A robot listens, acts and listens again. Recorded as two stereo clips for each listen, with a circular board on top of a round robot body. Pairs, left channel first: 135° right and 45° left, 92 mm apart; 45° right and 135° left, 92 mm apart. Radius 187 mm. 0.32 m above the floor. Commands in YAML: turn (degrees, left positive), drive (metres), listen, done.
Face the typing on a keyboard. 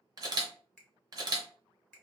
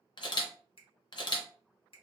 listen: true
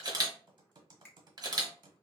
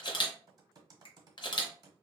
turn: 90
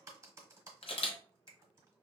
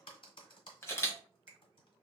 turn: -15
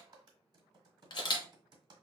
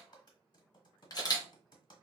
done: "Facing the typing on a keyboard, 1 to 2 m away."